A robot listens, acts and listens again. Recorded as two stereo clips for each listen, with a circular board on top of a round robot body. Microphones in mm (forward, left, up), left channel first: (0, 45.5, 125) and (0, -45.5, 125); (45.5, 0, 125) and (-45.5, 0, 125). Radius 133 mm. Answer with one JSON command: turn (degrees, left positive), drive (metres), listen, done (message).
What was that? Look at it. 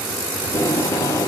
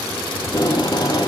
{"turn": 35}
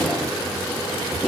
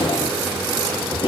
{"done": "Found it: tape being pulled, straight ahead."}